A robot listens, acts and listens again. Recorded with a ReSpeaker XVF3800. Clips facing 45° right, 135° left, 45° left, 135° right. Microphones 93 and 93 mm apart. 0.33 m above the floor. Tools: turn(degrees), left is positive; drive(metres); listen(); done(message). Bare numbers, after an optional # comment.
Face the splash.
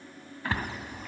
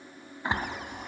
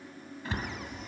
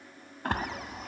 # The splash: 155° right.
turn(-155)
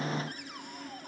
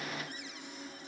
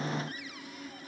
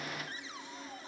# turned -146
# Nothing new. It was at 10° right.
turn(-10)
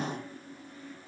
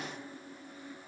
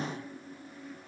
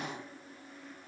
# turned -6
done("Facing where the splash came from. I can't hear it now.")